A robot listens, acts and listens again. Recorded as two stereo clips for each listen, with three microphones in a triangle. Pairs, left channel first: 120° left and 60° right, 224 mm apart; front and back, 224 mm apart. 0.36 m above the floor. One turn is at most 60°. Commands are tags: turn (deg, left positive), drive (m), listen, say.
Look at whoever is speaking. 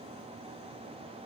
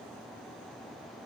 <listen/>
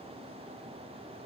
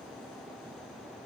<listen/>
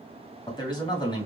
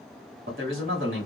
<turn deg="-60"/>
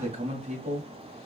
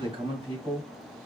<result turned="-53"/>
<turn deg="-60"/>
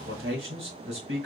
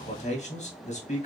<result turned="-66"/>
<turn deg="-55"/>
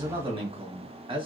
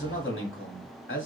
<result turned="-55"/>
<say>Found it: a man speaking, straight ahead, 1 to 2 m away.</say>